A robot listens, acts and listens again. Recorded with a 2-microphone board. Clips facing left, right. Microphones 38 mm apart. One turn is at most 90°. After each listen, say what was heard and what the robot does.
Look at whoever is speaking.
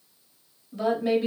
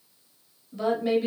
Turn 30° left.
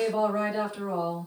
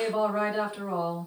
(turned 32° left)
So it is at 25° right. Turn 25° right.
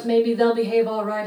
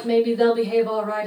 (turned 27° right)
Found it: a woman speaking, straight ahead, 1 to 2 m away.